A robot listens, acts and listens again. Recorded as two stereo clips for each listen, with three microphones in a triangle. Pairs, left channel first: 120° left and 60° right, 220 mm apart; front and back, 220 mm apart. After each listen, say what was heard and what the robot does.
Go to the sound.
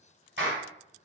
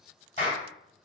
The clap: 50° right. Turn 50° right.
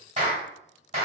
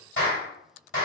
The clap is now 10° right. Turn 10° right.
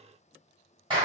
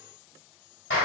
Drive 1.0 m forward.
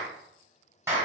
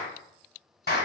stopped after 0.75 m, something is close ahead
The clap is now 10° left. Turn 10° left.
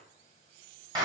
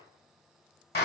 I am next to the clap.